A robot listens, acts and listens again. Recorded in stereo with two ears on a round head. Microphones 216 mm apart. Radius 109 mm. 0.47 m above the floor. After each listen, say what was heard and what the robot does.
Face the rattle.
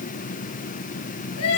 Keep listening.
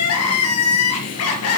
Keep listening.
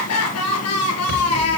The rattle: about 70° right or 110° right. Turn 70° right.
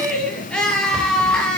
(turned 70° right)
Found it: a rattle, straight ahead.